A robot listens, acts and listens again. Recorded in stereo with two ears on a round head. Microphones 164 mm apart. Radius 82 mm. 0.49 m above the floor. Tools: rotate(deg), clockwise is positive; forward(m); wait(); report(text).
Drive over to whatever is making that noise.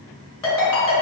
rotate(-15)
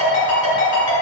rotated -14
rotate(-150)
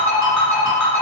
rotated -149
forward(1.0)
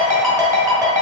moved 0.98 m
forward(1.0)
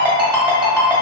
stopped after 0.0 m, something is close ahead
report("Arrived at the ringtone, straight ahead.")